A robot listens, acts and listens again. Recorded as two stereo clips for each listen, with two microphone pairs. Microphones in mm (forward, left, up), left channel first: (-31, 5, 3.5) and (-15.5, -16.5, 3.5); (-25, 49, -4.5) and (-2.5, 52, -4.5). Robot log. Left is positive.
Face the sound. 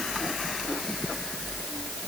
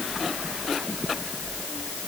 cmd idle
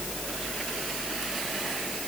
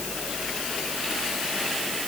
cmd idle
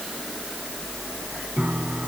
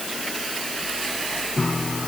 note: The piano: 95° right.
cmd yaw -95
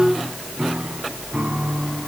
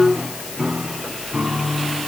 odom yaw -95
note: The piano is now 25° right.
cmd yaw -25
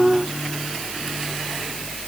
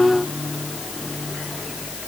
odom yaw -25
cmd idle
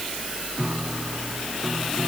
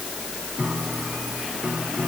end: Found it: a piano, straight ahead.